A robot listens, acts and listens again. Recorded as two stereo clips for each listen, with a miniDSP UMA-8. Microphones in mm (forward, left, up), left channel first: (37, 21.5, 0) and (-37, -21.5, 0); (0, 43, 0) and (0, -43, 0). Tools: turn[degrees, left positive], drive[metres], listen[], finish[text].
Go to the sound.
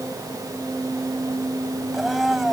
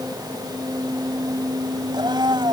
Thought: The blender: 65° right.
Action: turn[-65]
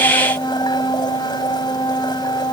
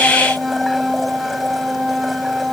Action: drive[1.0]
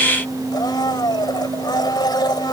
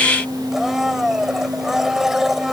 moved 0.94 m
Action: drive[1.0]
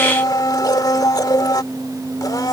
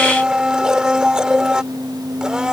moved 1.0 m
Thought: The blender is now 10° right.
Action: turn[-10]
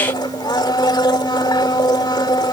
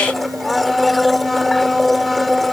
Action: drive[1.0]
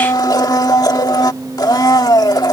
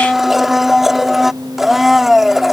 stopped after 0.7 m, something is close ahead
Action: finish[Arrived at the blender, straight ahead.]